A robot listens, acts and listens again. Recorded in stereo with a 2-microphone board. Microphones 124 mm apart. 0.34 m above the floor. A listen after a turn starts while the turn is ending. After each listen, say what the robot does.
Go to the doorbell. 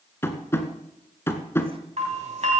Turn 60° right.
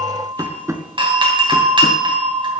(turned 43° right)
Turn 50° right.
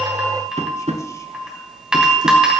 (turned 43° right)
Drive 1.0 m forward.
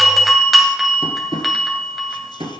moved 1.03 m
Drive 1.0 m forward.
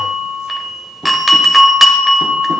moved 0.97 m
Drive 1.0 m forward.
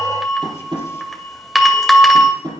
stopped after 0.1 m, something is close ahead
Arrived at the doorbell, straight ahead.